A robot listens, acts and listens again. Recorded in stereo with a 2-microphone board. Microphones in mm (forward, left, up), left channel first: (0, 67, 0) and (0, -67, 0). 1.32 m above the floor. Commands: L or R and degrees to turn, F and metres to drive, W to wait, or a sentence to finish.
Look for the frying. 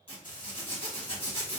L90
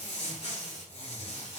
Found it: frying, straight ahead, 1 to 2 m away.